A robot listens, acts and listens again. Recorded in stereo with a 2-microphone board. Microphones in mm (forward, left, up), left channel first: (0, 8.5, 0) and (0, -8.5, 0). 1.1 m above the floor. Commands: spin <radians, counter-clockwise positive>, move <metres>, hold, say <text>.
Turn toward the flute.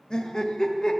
hold
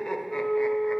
spin 1.31
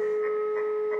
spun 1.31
spin 0.35
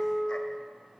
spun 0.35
say Facing the flute.